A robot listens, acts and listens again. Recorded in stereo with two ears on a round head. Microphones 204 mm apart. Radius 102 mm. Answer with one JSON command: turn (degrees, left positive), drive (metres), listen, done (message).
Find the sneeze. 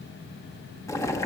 {"listen": true}
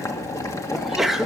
{"turn": 30}
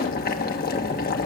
{"listen": true}
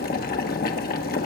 {"done": "I heard a sneeze, but can't make it out now. It was about 30° right or 150° left."}